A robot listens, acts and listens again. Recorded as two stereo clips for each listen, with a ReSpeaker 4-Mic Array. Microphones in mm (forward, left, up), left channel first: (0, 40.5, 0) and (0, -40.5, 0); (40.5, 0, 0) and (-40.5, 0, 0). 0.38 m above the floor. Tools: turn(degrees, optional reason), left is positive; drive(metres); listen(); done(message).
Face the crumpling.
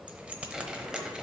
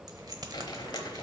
done("Facing the crumpling.")